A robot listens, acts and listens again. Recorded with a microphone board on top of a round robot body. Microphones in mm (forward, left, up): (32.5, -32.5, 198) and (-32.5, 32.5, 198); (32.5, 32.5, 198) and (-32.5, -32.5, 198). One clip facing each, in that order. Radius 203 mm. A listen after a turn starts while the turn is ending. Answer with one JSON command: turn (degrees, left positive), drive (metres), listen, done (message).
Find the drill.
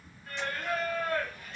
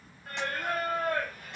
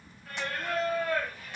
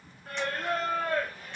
{"listen": true}
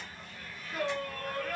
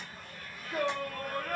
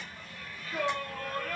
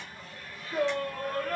{"listen": true}
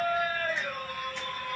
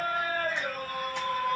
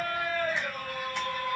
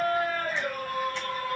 {"done": "I can't make out a drill to turn to."}